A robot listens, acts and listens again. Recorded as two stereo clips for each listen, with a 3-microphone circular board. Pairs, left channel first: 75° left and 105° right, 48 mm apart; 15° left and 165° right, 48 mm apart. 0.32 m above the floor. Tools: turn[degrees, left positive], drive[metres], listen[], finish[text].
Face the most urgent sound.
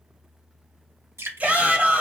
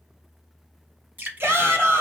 Thought: The shout: 155° right.
Action: turn[-155]
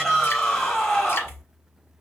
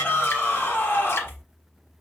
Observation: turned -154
Action: finish[Found it: a shout, straight ahead.]